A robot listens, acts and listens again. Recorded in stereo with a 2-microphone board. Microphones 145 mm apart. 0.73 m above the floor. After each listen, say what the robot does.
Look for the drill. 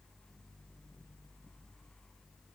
Keep listening.
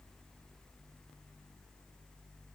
Keep listening.
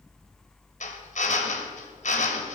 Turn 60° left.
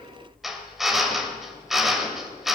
Facing the drill.